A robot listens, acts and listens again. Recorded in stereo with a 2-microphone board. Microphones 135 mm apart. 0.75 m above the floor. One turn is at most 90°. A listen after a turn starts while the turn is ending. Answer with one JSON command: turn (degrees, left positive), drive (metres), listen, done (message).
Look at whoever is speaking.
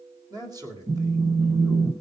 {"turn": -30}
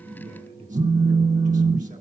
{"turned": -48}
{"turn": -90}
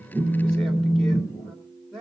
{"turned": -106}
{"done": "Facing the man speaking."}